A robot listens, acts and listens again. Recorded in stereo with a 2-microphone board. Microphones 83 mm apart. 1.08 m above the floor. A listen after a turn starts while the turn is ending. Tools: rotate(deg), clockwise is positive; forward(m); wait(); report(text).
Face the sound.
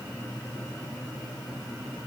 wait()
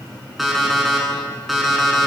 rotate(-30)
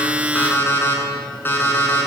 rotate(-155)
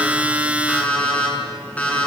rotate(-15)
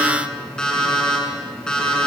rotate(-10)
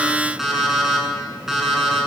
report("Found it: an alarm clock, straight ahead, over 4 m away.")